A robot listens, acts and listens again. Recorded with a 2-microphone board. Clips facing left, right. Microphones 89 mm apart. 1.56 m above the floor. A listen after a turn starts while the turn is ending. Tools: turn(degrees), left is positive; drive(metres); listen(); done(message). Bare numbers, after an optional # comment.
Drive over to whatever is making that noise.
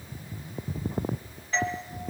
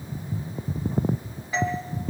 turn(-30)
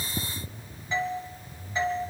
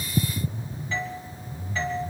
# So it is at 20° left.
turn(20)
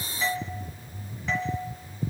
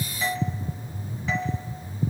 drive(1.0)
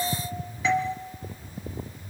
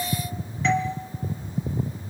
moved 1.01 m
drive(1.0)
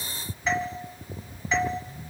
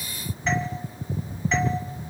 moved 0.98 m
listen()
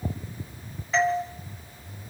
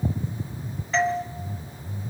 drive(1.0)
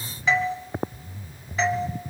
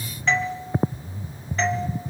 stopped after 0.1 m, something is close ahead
done("Arrived at the doorbell, straight ahead.")